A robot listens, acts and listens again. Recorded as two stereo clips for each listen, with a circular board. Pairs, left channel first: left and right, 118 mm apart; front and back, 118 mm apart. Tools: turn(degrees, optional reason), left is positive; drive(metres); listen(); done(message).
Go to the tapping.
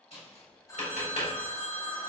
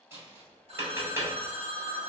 turn(degrees=110, reason="The tapping: 110° left.")
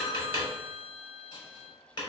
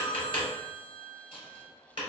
turn(degrees=40, reason="The tapping is now 40° left.")
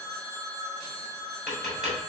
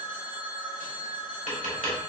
drive(metres=1.0)
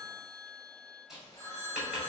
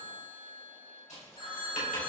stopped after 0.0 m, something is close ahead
done("Something is in my way. I am facing the tapping but have not reached it.")